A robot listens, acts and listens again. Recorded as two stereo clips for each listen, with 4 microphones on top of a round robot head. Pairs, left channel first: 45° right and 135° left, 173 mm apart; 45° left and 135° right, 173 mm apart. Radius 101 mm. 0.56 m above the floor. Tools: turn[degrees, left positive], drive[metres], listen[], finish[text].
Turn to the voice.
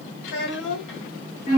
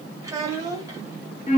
Thought: The child speaking: 60° right.
Action: turn[-60]
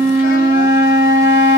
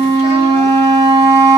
Action: listen[]
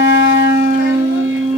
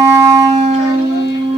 Action: listen[]
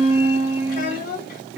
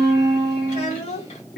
Action: finish[Facing the child speaking, 1 to 2 m away.]